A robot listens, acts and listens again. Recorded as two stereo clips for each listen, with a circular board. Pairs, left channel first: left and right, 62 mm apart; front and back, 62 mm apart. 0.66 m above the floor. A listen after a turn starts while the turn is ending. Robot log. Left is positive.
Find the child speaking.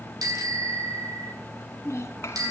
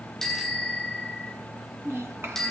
note: The child speaking: 135° left.
cmd yaw +135
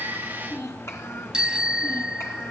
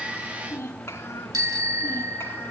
note: The child speaking is now 50° left.
cmd yaw +50
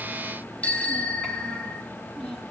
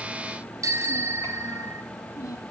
note: The child speaking is now 10° left.
cmd yaw +10
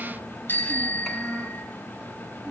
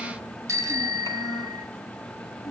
cmd idle
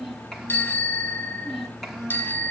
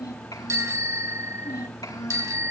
end: Found it: a child speaking, straight ahead, over 4 m away.